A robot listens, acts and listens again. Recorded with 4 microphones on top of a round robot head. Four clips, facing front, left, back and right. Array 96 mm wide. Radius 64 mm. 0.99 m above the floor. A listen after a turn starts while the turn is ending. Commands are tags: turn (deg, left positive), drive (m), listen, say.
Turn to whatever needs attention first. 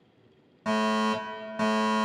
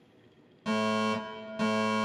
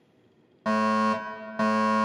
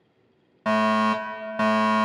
<turn deg="-115"/>
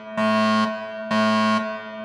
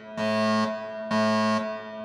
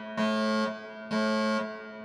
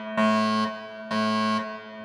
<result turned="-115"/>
<say>Found it: a fire alarm, straight ahead, 2 to 4 m away.</say>